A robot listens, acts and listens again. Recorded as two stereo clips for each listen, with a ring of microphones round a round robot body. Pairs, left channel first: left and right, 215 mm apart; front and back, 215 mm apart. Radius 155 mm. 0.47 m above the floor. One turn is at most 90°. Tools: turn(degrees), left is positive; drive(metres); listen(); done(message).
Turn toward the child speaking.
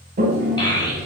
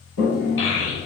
turn(degrees=20)
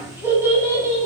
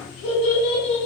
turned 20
turn(degrees=-15)
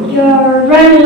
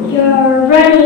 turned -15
done("Facing the child speaking, 2 to 4 m away.")